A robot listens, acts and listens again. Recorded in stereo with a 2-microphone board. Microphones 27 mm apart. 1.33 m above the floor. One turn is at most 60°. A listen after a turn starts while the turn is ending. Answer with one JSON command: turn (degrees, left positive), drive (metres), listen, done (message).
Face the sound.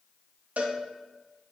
{"turn": -60}
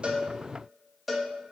{"done": "Facing the cowbell."}